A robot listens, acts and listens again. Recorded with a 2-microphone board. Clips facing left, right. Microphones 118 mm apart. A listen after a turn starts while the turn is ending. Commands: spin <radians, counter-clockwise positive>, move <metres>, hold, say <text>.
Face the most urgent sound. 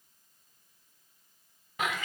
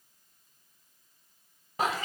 hold
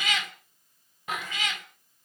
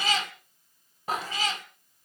hold
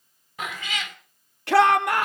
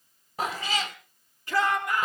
spin 1.57
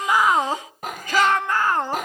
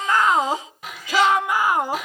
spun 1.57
spin -0.17
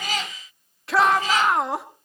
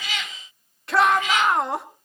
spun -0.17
say Facing the shout.